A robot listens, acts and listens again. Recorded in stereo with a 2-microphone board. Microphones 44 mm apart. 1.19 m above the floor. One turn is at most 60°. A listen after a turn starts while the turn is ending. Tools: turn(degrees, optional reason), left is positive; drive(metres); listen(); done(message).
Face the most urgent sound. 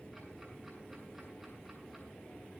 listen()
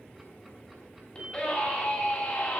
turn(degrees=30, reason="The scream: about 30° left or 150° left.")
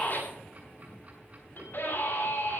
turn(degrees=60, reason="So it is at 120° left.")
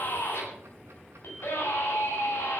turn(degrees=60, reason="The scream is now 65° left.")
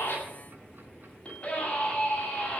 turn(degrees=25, reason="The scream is now 25° left.")
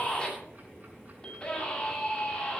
turn(degrees=15, reason="The scream is now 15° left.")
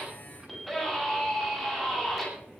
done("Found it: a scream, straight ahead.")